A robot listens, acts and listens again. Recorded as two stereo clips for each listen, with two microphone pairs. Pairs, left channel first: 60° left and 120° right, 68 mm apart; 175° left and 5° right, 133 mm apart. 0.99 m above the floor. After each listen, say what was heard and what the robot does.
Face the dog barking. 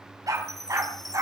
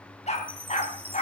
The dog barking: 155° right. Turn 155° right.
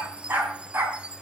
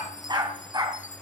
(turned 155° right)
The dog barking is now 65° right. Turn 65° right.
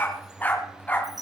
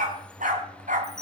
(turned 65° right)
The dog barking is now 10° right. Turn 10° right.
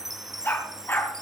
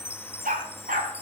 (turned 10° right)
Found it: a dog barking, straight ahead, 2 to 4 m away.